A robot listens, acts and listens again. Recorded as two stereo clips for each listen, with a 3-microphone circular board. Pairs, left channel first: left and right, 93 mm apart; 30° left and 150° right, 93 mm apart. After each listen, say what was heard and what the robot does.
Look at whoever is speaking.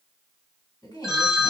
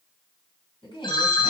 The woman speaking: 50° left. Turn 50° left.
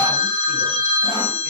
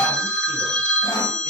Keep listening.
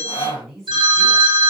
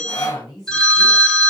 Facing the woman speaking, 2 to 4 m away.